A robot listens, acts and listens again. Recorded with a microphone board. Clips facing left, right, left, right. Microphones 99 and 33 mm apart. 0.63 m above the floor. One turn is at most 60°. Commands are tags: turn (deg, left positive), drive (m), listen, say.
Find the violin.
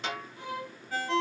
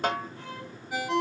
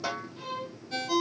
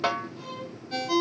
<turn deg="30"/>
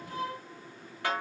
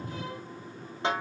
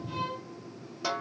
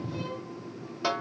<listen/>
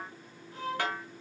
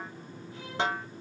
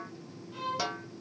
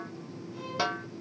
<turn deg="60"/>
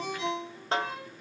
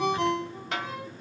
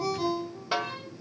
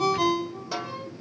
<turn deg="60"/>
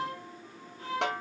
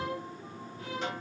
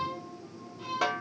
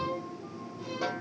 <turn deg="35"/>
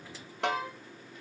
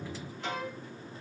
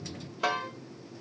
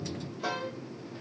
<say>Found it: a violin, straight ahead.</say>